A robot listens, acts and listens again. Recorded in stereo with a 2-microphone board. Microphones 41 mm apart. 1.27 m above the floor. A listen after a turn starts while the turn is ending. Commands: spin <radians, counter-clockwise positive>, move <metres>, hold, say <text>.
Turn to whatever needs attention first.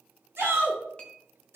spin -1.57
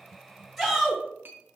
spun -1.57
say Found it: a shout, straight ahead, 2 to 4 m away.